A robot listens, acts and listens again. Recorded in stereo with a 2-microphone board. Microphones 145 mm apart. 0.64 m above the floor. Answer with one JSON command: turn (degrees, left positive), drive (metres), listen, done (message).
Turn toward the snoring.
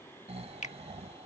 {"turn": -50}
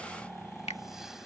{"done": "Found it: snoring, straight ahead."}